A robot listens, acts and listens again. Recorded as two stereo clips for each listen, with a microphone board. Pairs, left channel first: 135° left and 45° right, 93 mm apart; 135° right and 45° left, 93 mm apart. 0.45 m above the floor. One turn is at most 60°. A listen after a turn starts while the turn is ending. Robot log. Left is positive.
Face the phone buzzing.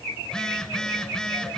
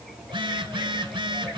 note: The phone buzzing: 55° left.
cmd yaw +55
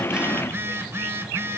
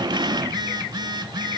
note: The phone buzzing is now 15° left.
cmd yaw +15
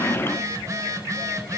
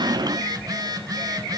end: Found it: a phone buzzing, straight ahead.